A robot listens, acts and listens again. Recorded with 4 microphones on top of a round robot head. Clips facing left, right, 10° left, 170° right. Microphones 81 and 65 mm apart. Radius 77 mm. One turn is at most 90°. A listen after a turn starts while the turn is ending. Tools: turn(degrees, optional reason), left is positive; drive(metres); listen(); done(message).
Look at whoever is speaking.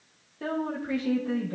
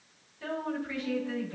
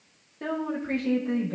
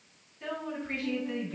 turn(degrees=45, reason="The woman speaking: 45° left.")
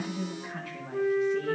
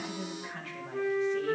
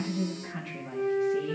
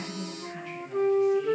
turn(degrees=10, reason="The woman speaking is now 10° left.")
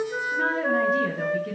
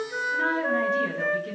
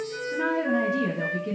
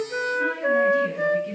done("Facing the woman speaking.")